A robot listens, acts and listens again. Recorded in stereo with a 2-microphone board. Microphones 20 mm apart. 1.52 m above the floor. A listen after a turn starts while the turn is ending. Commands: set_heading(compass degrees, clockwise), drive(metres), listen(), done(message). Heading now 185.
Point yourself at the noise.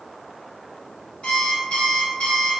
set_heading(120)
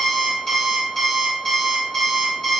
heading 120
set_heading(100)
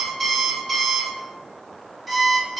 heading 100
set_heading(90)
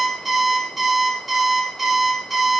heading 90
done("Facing the alarm clock, 1 to 2 m away.")